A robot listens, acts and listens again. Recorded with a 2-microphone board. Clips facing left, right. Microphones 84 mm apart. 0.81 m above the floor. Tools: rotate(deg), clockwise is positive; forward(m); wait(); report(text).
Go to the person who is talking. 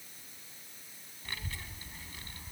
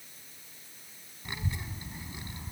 rotate(20)
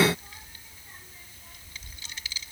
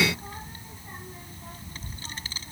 rotate(140)
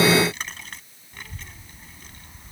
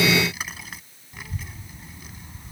forward(1.0)
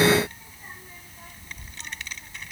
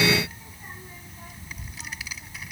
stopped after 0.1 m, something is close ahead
report("Something is in my way. I am facing the child speaking but have not reached it.")